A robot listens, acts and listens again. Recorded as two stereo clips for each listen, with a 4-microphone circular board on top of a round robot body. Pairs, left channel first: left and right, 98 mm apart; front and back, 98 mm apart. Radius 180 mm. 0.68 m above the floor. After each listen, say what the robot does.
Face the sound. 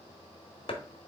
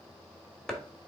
Turn 85° left.
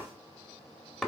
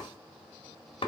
Facing the chopping, 1 to 2 m away.